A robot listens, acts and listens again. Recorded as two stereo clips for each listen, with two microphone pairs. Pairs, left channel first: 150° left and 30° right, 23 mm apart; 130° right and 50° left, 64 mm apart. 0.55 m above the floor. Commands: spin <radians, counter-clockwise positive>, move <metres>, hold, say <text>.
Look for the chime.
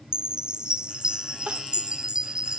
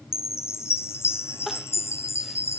spin -1.40
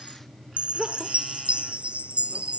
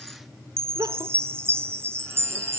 say Found it: a chime, straight ahead.